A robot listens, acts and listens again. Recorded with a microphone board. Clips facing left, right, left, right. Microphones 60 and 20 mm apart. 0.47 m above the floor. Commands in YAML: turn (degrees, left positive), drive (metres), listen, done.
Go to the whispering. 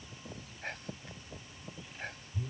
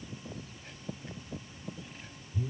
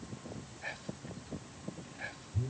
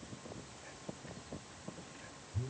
turn: 65
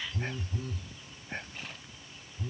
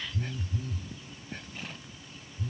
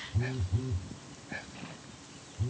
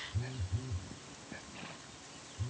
listen: true
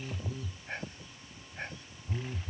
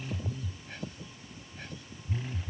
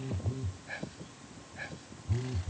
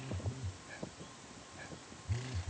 turn: 45
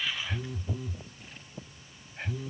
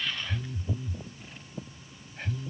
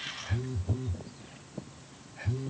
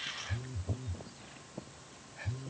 turn: 10
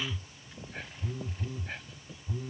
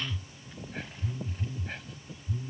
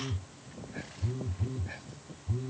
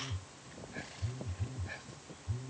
listen: true
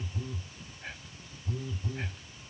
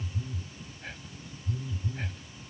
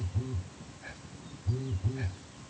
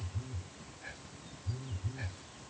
listen: true
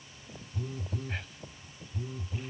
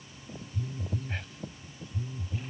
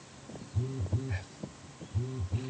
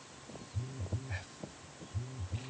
done: "I heard whispering from this way, but can't make it out now. I did not reach it."